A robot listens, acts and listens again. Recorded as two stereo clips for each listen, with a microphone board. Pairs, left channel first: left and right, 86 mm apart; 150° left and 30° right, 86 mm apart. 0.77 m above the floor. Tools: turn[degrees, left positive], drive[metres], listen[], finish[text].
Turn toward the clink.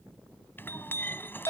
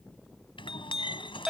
Thought: The clink: 155° left.
Action: turn[155]
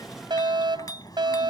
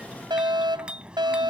Thought: The clink is now 45° left.
Action: turn[45]
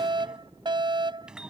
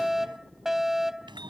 Thought: The clink is now 10° right.
Action: turn[-10]
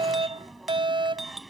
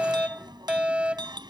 Action: finish[Facing the clink.]